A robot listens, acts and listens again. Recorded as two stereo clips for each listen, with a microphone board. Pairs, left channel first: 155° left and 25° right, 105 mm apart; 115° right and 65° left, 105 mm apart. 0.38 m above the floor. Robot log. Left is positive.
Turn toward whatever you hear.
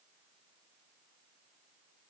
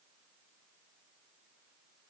cmd idle
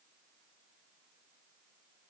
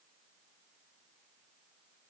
cmd idle
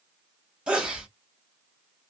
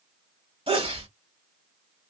note: The sneeze: 60° left.
cmd yaw +60
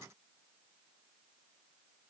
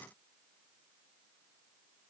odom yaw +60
end: I heard a sneeze from this way, but can't make it out now.